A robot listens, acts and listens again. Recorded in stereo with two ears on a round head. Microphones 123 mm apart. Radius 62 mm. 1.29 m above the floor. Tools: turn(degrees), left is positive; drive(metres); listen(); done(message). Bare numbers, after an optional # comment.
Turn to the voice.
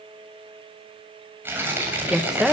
turn(-30)
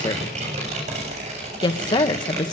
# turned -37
# So it is at 30° left.
turn(30)
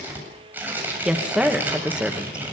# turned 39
# The woman speaking is now 10° right.
turn(-10)
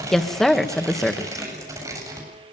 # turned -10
done("Facing the woman speaking, 1 to 2 m away.")